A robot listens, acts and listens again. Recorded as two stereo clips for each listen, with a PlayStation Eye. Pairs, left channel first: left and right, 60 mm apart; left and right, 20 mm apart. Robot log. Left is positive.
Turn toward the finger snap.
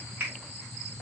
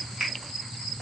note: The finger snap: about 30° right or 150° right.
cmd yaw -30
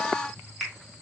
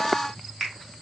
end: Facing the finger snap, 1 to 2 m away.